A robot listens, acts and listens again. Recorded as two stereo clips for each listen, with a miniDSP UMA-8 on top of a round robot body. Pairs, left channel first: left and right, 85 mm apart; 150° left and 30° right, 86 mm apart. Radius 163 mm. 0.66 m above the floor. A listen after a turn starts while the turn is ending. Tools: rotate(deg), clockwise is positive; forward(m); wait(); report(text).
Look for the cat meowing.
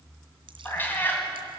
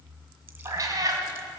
rotate(-20)
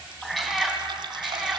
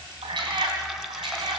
report("Facing the cat meowing.")